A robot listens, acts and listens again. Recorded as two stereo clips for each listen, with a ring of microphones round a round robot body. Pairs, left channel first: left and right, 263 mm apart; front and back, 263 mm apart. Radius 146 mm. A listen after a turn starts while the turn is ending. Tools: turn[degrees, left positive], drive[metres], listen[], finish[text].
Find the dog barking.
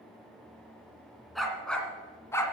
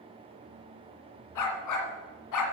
Thought: The dog barking: 10° left.
Action: turn[10]
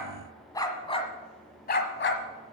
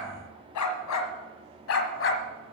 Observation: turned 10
Thought: The dog barking is now 45° left.
Action: turn[45]
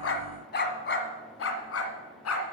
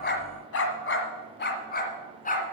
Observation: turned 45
Thought: The dog barking is now 60° left.
Action: turn[60]
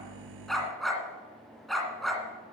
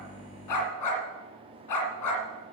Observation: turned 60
Action: finish[Facing the dog barking.]